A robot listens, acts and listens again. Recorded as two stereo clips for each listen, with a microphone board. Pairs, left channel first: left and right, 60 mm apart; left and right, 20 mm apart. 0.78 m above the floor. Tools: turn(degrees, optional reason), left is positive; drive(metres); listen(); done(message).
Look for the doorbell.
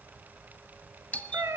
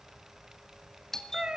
turn(degrees=25, reason="The doorbell: about 25° left or 155° left.")
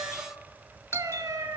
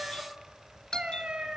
turn(degrees=125, reason="So it is at 125° left.")
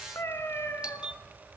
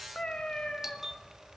turn(degrees=-20, reason="The doorbell is now 20° right.")
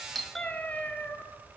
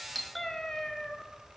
done("Found it: a doorbell, straight ahead, 1 to 2 m away.")